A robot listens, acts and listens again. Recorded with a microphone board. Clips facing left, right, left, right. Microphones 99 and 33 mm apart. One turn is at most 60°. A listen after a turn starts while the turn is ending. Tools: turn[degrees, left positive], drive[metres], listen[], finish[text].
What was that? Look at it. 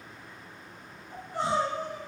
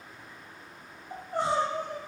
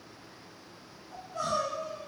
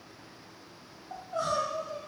Thought: The crying: about 50° right or 130° right.
Action: turn[-50]
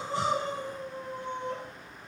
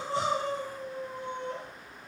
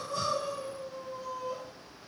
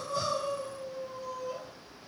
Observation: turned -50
Action: finish[Found it: crying, straight ahead.]